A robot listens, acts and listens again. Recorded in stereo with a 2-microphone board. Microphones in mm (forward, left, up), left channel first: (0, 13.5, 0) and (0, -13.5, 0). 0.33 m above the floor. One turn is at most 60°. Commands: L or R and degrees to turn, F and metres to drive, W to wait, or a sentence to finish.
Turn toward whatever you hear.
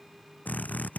L60
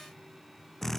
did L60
L10
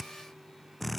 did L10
Found it: a drill, straight ahead.